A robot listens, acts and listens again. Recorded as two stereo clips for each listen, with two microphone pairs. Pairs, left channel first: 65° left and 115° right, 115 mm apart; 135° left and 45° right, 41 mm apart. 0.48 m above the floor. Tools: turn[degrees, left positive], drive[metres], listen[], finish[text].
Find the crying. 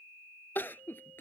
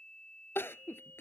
Thought: The crying: 140° left.
Action: turn[140]
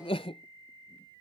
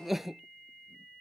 Thought: The crying is now 35° left.
Action: turn[35]
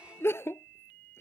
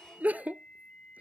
Action: finish[Facing the crying.]